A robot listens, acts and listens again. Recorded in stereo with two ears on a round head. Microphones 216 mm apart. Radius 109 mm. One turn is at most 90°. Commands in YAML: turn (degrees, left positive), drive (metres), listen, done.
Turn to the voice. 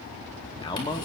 turn: 20
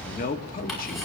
turn: 90
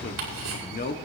turn: 40
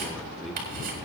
done: "Facing the man speaking, 1 to 2 m away."